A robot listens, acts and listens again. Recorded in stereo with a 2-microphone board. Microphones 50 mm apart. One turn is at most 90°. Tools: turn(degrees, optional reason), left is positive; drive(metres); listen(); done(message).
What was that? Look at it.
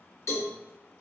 turn(degrees=75, reason="The cowbell: about 75° left or 105° left.")
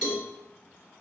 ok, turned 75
turn(degrees=15, reason="So it is at 15° left.")
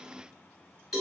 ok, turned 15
done("Found it: a cowbell, straight ahead.")